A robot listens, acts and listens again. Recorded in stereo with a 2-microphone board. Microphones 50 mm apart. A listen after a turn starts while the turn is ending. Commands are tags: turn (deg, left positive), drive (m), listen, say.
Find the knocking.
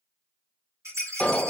<listen/>
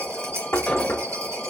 <turn deg="60"/>
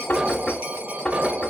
<turn deg="25"/>
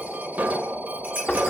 <turn deg="15"/>
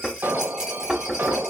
<say>Facing the knocking.</say>